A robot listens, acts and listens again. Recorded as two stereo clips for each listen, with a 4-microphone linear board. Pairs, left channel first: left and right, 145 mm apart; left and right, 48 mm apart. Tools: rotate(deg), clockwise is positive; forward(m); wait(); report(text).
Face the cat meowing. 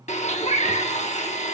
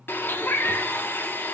rotate(-60)
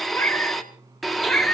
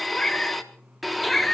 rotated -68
report("Facing the cat meowing.")